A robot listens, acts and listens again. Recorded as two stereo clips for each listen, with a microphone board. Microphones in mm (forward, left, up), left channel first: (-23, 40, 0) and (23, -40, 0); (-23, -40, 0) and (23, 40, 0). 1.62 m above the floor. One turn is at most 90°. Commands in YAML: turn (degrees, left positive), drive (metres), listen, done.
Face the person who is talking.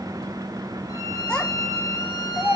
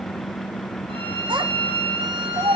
turn: 40
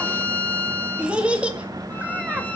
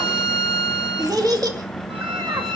turn: 15
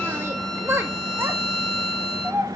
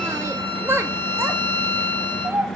done: "Facing the child speaking."